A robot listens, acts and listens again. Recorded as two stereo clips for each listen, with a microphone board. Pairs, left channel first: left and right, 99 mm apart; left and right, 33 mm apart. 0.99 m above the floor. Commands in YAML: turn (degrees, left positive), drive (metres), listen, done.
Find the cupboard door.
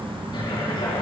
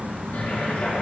turn: 45
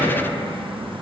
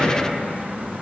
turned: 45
turn: 85
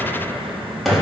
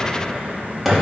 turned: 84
done: "Found it: a cupboard door, straight ahead, 2 to 4 m away."